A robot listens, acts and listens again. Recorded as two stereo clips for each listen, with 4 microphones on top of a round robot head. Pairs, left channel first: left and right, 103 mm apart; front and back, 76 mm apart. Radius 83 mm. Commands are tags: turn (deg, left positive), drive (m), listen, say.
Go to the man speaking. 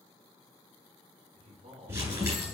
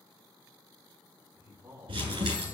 <turn deg="-110"/>
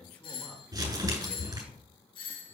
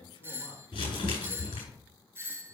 <turn deg="10"/>
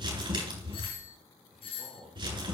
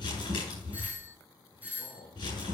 <drive m="1.0"/>
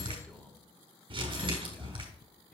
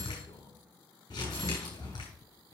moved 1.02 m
<turn deg="15"/>
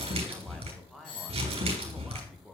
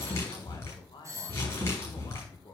<drive m="1.0"/>
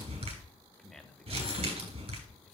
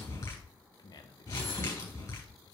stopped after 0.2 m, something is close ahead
<say>I am next to the man speaking.</say>